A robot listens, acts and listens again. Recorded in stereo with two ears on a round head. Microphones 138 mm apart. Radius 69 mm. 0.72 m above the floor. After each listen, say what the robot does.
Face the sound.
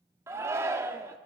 Turn 20° right.
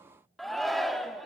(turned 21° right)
Facing the shout.